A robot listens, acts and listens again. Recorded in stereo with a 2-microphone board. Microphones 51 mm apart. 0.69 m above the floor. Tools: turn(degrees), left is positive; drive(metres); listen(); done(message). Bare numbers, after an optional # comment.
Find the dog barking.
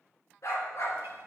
# The dog barking: about 60° left or 120° left.
turn(60)
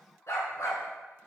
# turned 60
# So it is at 75° left.
turn(75)
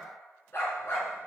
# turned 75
# The dog barking is now 50° left.
turn(50)
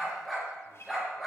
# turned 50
done("Found it: a dog barking, straight ahead.")